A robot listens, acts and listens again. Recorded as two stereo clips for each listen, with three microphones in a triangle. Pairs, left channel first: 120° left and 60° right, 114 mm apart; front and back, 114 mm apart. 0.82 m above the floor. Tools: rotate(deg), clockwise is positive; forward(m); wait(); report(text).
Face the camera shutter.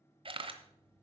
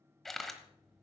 rotate(90)
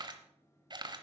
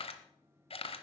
rotate(15)
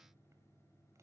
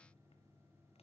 wait()
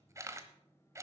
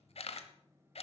report("Facing the camera shutter, 1 to 2 m away.")